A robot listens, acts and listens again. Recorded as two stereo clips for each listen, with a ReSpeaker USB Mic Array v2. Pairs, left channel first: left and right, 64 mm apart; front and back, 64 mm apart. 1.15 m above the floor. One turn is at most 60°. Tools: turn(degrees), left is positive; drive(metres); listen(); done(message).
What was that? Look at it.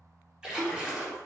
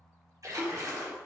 turn(degrees=-60)
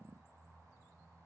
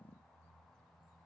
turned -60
turn(degrees=-60)
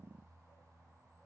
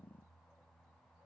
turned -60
turn(degrees=-45)
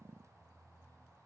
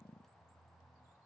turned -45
done("I heard a splash from this way, but can't make it out now.")